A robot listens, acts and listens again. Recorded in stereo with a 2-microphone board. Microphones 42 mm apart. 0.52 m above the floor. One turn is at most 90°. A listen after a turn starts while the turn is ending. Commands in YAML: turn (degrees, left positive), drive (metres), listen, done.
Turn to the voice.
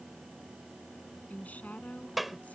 turn: 40
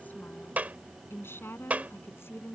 turn: 90
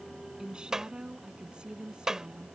turn: -20
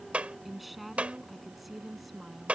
done: "Facing the woman speaking."